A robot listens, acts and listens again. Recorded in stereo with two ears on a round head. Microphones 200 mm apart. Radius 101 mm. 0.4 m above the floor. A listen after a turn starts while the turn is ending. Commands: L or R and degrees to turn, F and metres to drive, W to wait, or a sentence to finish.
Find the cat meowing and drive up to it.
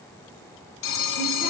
W
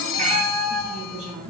R30
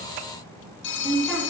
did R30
W
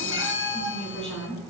W
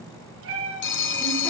R115
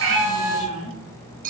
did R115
F1.0
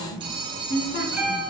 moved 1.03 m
F1.0
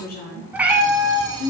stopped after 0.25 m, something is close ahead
I am next to the cat meowing.